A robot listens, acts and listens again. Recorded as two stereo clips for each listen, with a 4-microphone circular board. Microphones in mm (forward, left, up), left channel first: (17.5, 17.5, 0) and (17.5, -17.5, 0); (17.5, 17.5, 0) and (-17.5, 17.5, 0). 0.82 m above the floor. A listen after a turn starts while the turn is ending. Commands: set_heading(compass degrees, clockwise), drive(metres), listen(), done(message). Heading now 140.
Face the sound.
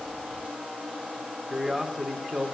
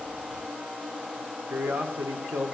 set_heading(325)
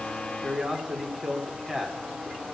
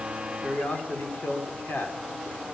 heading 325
set_heading(345)
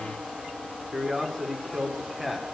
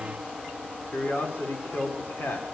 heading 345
set_heading(355)
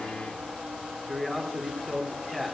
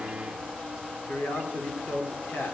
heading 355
done("Facing the man speaking.")